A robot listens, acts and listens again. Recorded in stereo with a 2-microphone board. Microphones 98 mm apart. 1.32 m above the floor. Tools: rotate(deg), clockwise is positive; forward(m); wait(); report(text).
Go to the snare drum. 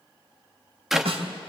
rotate(75)
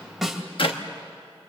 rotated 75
forward(1.0)
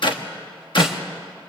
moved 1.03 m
wait()
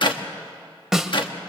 forward(1.0)
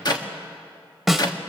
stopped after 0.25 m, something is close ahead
report("Arrived at the snare drum, straight ahead.")